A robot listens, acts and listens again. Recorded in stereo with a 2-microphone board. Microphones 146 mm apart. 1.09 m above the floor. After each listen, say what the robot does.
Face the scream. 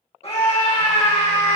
Turn 45° left.
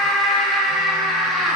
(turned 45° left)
Found it: a scream, straight ahead.